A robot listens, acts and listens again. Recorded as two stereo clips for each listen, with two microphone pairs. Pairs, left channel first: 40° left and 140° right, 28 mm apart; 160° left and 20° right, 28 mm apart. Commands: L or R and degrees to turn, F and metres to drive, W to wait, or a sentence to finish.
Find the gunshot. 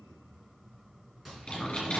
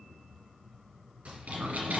R60
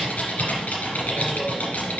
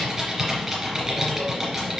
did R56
I heard a gunshot from this way, but can't make it out now.